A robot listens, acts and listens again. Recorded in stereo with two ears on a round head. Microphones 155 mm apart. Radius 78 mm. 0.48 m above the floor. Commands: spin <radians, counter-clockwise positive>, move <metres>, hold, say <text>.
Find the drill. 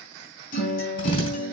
spin 0.61
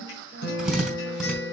say Facing the drill.